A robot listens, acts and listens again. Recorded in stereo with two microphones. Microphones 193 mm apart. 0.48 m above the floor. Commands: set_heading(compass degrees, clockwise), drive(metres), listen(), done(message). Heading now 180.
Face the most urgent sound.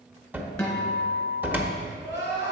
set_heading(250)
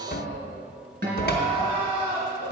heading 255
set_heading(285)
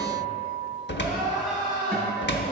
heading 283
done("Facing the crying.")